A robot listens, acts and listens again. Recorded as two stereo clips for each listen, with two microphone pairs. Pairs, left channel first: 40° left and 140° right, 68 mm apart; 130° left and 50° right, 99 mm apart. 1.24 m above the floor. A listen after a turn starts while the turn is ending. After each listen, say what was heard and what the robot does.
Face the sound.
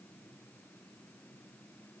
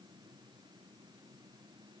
Keep listening.
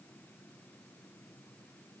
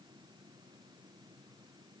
Keep listening.
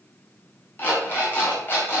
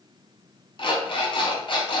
The alarm clock: 100° left. Turn 100° left.
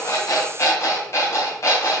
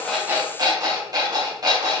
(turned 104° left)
Found it: an alarm clock, straight ahead, 2 to 4 m away.